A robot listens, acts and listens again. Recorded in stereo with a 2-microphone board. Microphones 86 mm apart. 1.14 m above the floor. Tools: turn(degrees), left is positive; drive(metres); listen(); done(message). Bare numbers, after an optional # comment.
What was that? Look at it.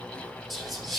turn(30)
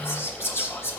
# So it is at 150° left.
turn(150)
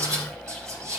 # The whispering is now 40° right.
turn(-40)
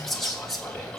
done("Facing the whispering.")